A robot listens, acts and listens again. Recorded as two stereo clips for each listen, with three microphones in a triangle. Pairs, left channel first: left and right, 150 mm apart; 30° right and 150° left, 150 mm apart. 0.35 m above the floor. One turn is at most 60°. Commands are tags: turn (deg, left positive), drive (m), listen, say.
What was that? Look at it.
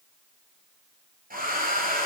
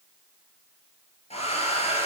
<turn deg="-60"/>
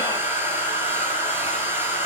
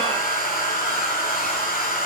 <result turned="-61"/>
<turn deg="-15"/>
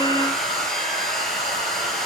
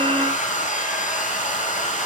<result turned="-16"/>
<say>Facing the hair dryer, over 4 m away.</say>